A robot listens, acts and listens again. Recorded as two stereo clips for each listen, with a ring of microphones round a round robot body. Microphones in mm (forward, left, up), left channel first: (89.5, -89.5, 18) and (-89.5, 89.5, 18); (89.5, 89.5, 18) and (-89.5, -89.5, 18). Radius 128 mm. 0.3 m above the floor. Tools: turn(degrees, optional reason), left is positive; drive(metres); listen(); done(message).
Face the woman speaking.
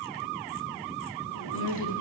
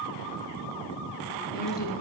turn(degrees=-10, reason="The woman speaking: 10° right.")
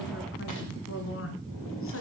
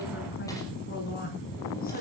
turn(degrees=-10, reason="The woman speaking is now 10° right.")
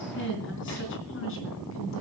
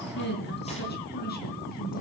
turn(degrees=-10, reason="The woman speaking is now 10° right.")
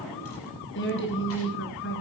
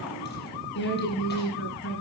done("Found it: a woman speaking, straight ahead.")